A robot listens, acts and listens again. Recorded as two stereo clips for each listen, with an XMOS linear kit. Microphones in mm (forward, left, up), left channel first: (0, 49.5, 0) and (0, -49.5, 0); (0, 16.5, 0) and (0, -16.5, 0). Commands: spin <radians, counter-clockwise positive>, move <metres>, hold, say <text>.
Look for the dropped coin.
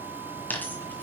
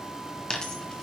spin 0.35
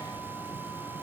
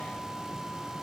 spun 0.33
hold
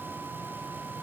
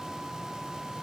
say I heard a dropped coin, but can't make it out now. It was about straight ahead or 145° left.